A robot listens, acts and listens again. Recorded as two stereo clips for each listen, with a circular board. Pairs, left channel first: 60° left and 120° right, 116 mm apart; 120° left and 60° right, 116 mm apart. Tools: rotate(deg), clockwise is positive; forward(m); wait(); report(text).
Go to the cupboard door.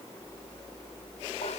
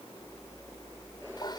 wait()
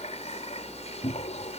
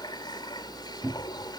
rotate(-15)
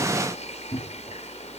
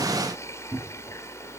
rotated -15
forward(1.0)
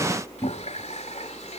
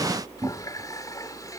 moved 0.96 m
rotate(10)
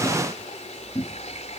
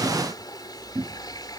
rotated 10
forward(1.0)
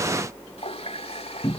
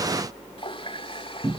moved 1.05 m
rotate(10)
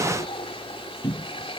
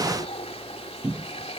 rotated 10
forward(1.0)
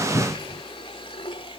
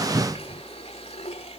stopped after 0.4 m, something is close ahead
report("Arrived at the cupboard door, straight ahead.")